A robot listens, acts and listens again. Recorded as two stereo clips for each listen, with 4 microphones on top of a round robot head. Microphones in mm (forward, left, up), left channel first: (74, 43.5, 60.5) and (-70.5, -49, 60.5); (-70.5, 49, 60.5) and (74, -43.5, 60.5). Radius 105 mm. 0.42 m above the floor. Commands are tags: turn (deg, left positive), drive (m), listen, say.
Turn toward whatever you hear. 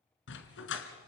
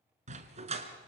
<turn deg="25"/>
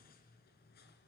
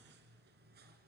<listen/>
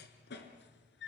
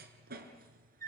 <turn deg="10"/>
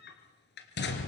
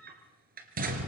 <turn deg="10"/>
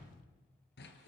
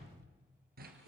<say>Facing the dog barking, 2 to 4 m away.</say>